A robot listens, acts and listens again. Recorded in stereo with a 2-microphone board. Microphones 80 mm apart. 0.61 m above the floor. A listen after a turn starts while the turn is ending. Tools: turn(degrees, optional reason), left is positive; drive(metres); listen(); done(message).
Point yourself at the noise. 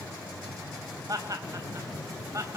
turn(degrees=-45, reason="The laughter: about 45° right or 135° right.")
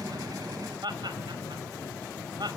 turn(degrees=-110, reason="So it is at 110° right.")
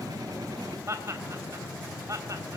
turn(degrees=-45, reason="The laughter is now 45° right.")
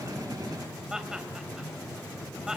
turn(degrees=-10, reason="The laughter is now 10° right.")
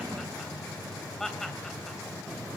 done("Facing the laughter, 2 to 4 m away.")